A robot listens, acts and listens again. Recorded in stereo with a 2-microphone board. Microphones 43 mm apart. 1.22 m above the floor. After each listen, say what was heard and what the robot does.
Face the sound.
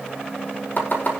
The chopping: about 50° left or 130° left. Turn 50° left.
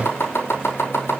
So it is at 80° left. Turn 80° left.
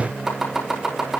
The chopping is now 10° right. Turn 10° right.
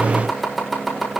Found it: chopping, straight ahead, over 4 m away.